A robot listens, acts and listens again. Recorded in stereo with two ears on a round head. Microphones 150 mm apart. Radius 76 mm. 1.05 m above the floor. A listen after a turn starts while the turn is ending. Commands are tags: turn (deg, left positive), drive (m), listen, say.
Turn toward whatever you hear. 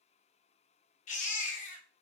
<turn deg="45"/>
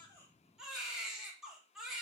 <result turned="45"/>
<say>Found it: a baby crying, straight ahead.</say>